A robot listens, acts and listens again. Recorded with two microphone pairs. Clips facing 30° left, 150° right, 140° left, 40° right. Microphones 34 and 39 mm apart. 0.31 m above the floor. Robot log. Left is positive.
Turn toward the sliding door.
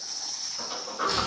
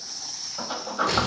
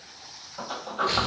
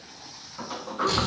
note: The sliding door: 175° left.
cmd yaw +175
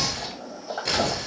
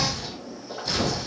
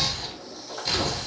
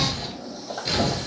note: The sliding door is now 15° left.
cmd yaw +15
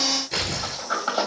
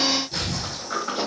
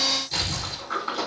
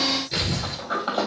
end: Facing the sliding door.